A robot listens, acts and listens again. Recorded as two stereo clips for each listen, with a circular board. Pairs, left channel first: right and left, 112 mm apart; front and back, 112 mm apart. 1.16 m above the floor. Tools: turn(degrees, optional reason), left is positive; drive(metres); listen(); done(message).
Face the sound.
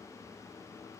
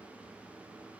listen()
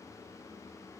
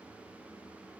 listen()
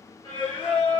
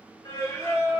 turn(degrees=-50, reason="The singing: 50° right.")
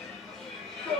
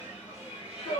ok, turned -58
done("Found it: singing, straight ahead, 1 to 2 m away.")